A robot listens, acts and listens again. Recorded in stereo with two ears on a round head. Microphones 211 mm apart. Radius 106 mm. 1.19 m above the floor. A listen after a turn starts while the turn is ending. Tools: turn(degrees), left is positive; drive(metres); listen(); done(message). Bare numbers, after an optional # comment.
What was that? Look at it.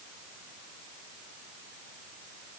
listen()
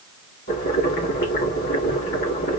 # The boiling: about 40° left or 140° left.
turn(40)
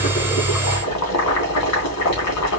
# So it is at 105° left.
turn(105)
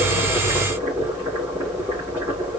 done("Found it: boiling, straight ahead, 2 to 4 m away.")